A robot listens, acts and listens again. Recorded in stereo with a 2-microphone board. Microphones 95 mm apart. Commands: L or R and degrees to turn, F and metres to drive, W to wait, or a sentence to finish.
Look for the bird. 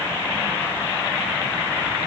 W
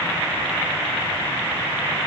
W
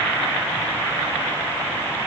I can't make out a bird to turn to.